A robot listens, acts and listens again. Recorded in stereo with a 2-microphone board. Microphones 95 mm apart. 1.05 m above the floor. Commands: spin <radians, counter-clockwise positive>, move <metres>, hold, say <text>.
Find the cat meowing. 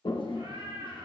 spin -1.57
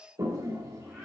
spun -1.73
spin 0.17
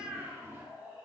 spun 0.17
spin -0.26
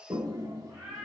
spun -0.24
say Facing the cat meowing.